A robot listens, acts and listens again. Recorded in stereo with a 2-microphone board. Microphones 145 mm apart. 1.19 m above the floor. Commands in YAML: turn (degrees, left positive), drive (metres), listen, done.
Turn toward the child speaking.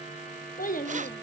turn: 70
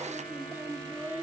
turn: -15
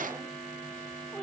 listen: true
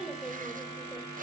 done: "Facing the child speaking, over 4 m away."